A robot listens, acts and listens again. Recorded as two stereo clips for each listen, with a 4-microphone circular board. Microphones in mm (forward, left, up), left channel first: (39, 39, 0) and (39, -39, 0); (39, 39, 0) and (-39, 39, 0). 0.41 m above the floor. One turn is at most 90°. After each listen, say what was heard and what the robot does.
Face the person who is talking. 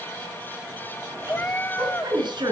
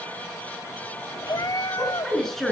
The woman speaking: 90° right. Turn 90° right.
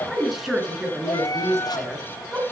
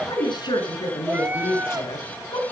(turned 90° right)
The woman speaking is now 10° right. Turn 10° right.
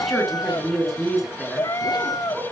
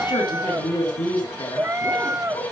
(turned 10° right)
Facing the woman speaking, over 4 m away.